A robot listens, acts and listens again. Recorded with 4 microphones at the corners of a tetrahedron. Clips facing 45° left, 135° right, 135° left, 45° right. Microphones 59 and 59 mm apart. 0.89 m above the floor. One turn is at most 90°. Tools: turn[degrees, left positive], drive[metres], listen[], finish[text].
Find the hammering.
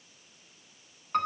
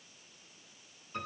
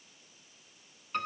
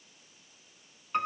Action: listen[]
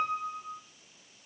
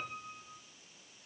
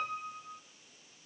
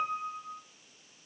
Action: listen[]
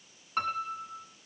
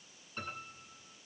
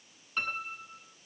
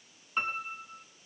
Action: finish[I can't make out hammering to turn to.]